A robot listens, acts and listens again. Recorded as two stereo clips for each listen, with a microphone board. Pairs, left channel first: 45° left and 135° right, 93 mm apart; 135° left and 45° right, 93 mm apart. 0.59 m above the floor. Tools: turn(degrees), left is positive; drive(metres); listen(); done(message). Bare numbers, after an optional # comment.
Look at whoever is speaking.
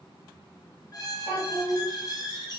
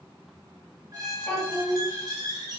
# The child speaking: 50° left.
turn(50)
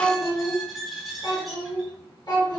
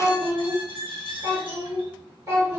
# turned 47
done("Found it: a child speaking, straight ahead, 1 to 2 m away.")